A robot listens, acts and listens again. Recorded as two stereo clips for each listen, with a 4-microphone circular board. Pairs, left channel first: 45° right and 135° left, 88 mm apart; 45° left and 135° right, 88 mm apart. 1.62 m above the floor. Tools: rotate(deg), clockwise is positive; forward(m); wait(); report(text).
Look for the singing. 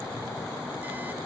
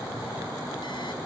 wait()
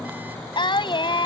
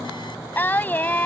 rotate(25)
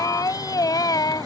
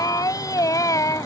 report("Facing the singing.")